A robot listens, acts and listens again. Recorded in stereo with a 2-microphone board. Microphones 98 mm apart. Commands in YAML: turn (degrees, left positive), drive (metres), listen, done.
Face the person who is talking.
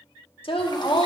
turn: 65
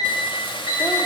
listen: true
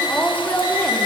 turn: 15
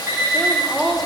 done: "Found it: a woman speaking, straight ahead, 1 to 2 m away."